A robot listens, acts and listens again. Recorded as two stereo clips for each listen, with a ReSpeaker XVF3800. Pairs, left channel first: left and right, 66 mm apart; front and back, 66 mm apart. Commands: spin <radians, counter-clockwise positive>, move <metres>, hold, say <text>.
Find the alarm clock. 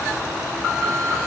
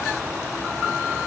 hold
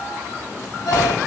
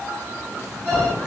hold
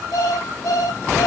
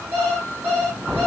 spin 1.83
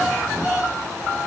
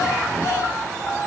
spin -0.61
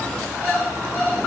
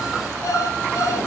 hold
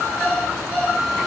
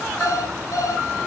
spin -0.17
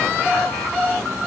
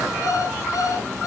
say Facing the alarm clock, over 4 m away.